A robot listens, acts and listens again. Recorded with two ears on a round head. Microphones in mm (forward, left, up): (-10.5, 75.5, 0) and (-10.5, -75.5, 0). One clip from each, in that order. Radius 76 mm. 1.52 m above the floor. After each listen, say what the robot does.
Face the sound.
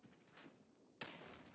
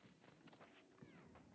Keep listening.
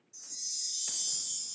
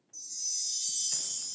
Turn 30° left.
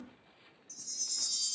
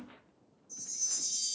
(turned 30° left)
Turn 150° left.
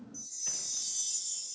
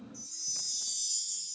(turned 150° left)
Turn 40° left.
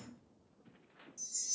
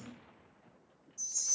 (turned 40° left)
Turn 20° left.
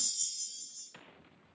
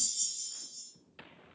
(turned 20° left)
Turn 10° left.
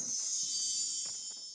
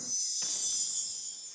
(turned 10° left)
Found it: a chime, straight ahead.